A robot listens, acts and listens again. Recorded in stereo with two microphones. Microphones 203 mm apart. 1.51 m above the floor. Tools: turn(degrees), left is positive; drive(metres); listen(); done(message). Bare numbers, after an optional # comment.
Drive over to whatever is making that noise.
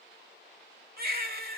# The baby crying: about 50° right or 130° right.
turn(-50)
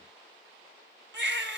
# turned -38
# So it is at 85° right.
turn(-85)
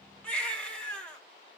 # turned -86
drive(1.0)
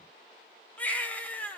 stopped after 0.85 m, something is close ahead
# The baby crying is now 10° left.
turn(10)
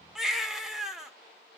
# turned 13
done("I am next to the baby crying.")